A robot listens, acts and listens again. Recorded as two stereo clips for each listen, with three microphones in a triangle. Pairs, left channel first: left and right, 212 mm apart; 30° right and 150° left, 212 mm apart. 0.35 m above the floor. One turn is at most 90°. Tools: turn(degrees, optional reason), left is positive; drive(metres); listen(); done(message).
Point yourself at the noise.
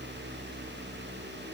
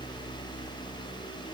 listen()
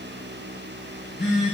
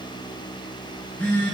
turn(degrees=50, reason="The phone buzzing: 50° left.")
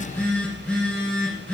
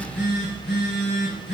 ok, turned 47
done("Facing the phone buzzing.")